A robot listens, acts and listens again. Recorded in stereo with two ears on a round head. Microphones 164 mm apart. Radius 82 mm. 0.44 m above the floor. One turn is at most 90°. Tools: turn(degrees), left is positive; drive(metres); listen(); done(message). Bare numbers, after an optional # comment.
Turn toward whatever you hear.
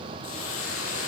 turn(90)
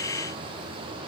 listen()
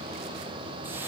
listen()
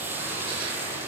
# The hiss is now 10° right.
turn(-10)
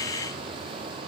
listen()
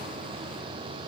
listen()
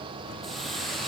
done("Found it: a hiss, straight ahead, over 4 m away.")